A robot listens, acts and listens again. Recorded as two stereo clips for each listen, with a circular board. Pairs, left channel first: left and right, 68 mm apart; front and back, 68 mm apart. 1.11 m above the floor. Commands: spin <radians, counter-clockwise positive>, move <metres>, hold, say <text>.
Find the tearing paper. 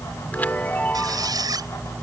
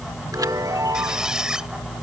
hold
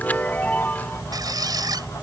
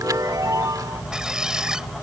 hold
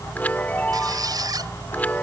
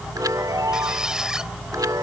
say I can't make out tearing paper to turn to.